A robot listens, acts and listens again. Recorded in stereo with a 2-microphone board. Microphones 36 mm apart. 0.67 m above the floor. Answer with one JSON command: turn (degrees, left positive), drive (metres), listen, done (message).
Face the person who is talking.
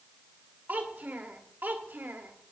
{"turn": -65}
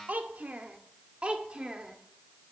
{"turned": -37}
{"turn": -25}
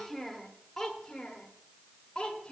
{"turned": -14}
{"turn": 20}
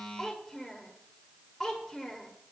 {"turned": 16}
{"done": "Facing the child speaking."}